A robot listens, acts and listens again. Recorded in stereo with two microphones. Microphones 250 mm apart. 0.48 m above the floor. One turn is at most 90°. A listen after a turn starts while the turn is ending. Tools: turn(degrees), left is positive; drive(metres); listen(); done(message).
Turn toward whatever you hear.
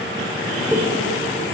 turn(degrees=30)
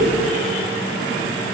listen()
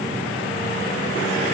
done("I heard a pop, but can't make it out now. It was about 25° right or 145° left.")